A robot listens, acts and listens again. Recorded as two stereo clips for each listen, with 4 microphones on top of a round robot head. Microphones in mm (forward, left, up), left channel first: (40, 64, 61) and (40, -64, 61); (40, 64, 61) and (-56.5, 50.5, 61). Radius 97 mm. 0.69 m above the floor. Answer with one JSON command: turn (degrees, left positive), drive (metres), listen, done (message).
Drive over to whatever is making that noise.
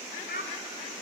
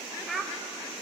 {"turn": 100}
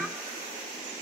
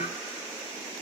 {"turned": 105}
{"listen": true}
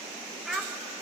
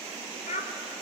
{"drive": 1.0}
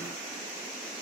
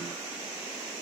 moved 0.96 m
{"listen": true}
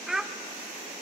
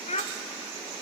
{"drive": 1.0}
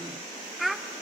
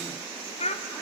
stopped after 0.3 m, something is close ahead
{"done": "Arrived at the child speaking, straight ahead."}